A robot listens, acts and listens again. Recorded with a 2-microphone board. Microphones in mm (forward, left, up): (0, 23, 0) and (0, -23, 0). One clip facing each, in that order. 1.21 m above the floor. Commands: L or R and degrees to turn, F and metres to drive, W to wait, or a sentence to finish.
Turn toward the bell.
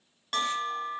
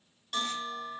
L55
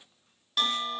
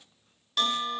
Found it: a bell, straight ahead.